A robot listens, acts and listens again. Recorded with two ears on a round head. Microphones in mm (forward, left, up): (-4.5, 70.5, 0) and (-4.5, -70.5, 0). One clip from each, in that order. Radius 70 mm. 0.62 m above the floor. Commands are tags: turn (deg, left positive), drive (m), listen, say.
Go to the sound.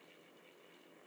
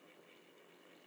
<listen/>
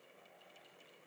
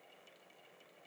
<listen/>
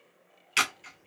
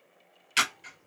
<turn deg="30"/>
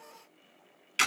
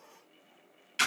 <turn deg="150"/>
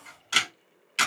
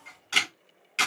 <turn deg="20"/>
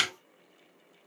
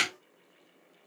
<drive m="1.0"/>
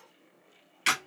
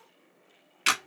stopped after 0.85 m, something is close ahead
<turn deg="-10"/>
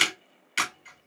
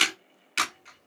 <say>I am next to the camera shutter.</say>